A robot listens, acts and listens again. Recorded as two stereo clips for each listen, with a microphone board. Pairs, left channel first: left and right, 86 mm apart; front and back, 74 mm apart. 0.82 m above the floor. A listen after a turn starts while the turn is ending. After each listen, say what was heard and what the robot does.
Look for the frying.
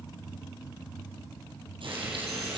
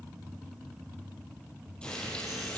The frying: 75° right. Turn 75° right.
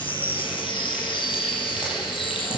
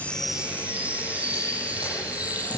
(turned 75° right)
The frying is now 10° right. Turn 10° right.
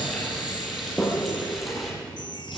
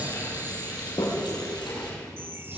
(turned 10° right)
Facing the frying.